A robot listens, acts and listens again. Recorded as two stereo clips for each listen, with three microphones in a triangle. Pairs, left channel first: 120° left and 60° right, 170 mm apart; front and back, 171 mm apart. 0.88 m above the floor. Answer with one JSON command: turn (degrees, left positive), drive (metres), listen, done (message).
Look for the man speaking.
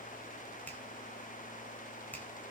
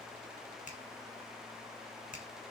{"listen": true}
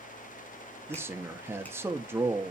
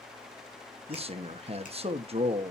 {"turn": -135}
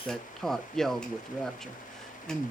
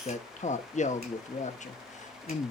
{"turn": 30}
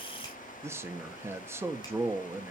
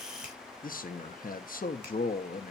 {"turn": 15}
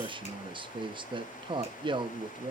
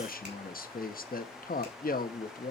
{"done": "Found it: a man speaking, straight ahead, 1 to 2 m away."}